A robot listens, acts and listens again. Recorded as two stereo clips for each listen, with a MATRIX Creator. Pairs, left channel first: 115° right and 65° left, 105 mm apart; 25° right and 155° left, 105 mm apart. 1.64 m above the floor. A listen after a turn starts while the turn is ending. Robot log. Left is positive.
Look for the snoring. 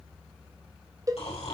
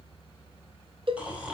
note: The snoring: 125° right.
cmd yaw -125
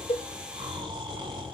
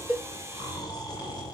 note: The snoring is now 25° left.
cmd yaw +25
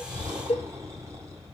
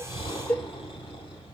note: The snoring is now 10° left.
cmd yaw +10
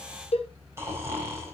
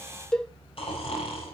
end: Facing the snoring.